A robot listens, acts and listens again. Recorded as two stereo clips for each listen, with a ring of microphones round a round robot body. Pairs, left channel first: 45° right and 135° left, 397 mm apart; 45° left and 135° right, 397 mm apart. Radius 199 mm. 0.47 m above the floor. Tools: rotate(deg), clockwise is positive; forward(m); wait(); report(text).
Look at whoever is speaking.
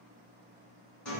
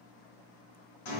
wait()
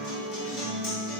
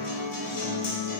wait()
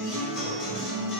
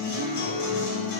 report("I can't make out anyone speaking, only a guitar.")